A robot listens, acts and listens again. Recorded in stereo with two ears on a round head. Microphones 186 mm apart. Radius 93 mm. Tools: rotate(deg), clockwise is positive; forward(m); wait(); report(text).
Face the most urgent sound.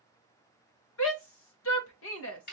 rotate(-65)
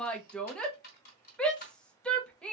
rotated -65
report("Found it: a shout, straight ahead.")